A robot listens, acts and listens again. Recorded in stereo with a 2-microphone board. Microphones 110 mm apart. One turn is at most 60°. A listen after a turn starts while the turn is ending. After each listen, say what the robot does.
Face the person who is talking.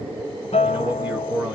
Turn 30° right.
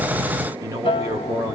Turn 60° right.
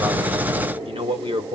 Turn 60° right.
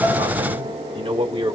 Turn 55° right.
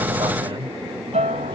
Turn 40° right.
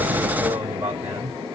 Turn 20° right.
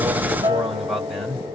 Facing the man speaking.